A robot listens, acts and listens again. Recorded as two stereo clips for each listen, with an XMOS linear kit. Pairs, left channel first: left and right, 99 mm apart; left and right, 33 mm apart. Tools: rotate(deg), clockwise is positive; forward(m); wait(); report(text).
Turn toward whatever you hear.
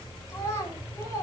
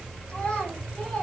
rotate(-35)
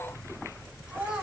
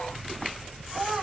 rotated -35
report("Facing the child speaking, over 4 m away.")